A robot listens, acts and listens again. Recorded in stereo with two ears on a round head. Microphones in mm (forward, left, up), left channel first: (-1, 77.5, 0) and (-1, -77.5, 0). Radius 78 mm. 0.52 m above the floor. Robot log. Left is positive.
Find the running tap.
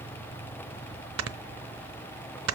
cmd idle
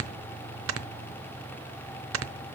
cmd idle
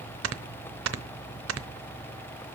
end: I can't make out a running tap, only snoring.